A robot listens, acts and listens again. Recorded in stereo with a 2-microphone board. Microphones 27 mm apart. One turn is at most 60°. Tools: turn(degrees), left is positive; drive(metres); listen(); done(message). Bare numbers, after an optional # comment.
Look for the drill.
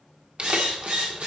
# The drill: about 55° right or 125° right.
turn(-55)
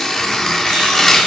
listen()
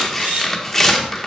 # So it is at 70° right.
turn(-60)
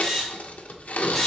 done("Found it: a drill, straight ahead, 2 to 4 m away.")